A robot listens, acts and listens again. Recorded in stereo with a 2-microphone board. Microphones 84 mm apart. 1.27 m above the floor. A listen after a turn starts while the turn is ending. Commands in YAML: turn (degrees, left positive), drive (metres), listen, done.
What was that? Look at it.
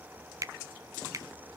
turn: -40
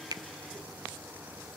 listen: true
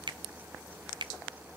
turn: -95
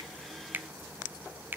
turn: -25
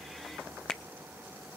turn: 10
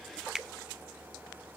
done: "Facing the finger snap, under 1 m away."